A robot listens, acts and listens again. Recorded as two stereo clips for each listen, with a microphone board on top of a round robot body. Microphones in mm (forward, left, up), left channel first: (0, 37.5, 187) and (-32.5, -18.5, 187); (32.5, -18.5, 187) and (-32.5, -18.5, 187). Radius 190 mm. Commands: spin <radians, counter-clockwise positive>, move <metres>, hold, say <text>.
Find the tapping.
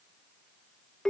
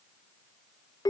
hold
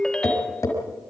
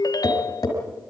spin 0.44
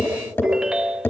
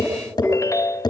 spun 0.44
say Found it: tapping, straight ahead.